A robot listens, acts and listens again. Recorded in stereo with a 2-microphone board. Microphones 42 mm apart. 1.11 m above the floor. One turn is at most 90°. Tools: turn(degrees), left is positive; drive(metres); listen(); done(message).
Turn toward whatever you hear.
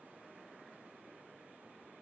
listen()
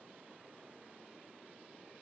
listen()
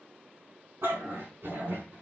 turn(degrees=-65)
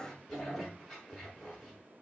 done("Found it: a dog barking, straight ahead.")